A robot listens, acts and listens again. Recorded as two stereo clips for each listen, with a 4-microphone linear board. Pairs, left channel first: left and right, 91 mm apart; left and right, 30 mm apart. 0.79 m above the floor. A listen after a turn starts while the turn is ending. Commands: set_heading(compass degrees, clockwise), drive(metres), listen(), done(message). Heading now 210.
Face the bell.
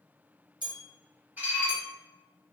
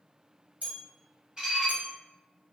set_heading(270)
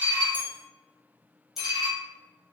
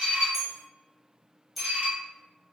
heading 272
done("Found it: a bell, straight ahead.")